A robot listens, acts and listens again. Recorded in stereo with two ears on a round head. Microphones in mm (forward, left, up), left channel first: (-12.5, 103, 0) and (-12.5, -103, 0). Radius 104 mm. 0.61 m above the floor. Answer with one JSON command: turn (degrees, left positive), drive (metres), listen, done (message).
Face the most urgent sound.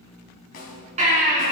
{"turn": -30}
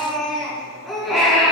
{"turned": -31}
{"done": "Facing the baby crying, over 4 m away."}